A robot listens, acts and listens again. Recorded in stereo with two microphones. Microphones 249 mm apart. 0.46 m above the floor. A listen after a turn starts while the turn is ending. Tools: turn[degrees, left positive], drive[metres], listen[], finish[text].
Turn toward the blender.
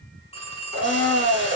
Thought: The blender: about 40° right or 140° right.
Action: turn[-40]
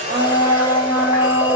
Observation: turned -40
Thought: So it is at 10° right.
Action: turn[-10]
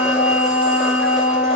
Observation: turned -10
Action: finish[Facing the blender, under 1 m away.]